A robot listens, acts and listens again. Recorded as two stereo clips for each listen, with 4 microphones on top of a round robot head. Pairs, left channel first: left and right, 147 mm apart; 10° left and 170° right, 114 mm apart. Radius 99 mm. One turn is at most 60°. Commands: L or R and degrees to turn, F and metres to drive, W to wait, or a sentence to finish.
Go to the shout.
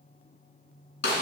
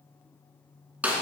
W
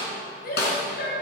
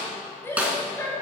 L60
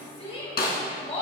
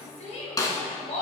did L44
L40
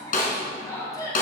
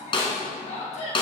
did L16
L25
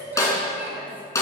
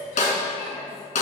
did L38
R15
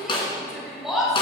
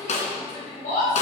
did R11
F1.0
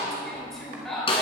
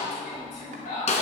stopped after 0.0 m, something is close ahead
Blocked. The shout is further on, straight ahead.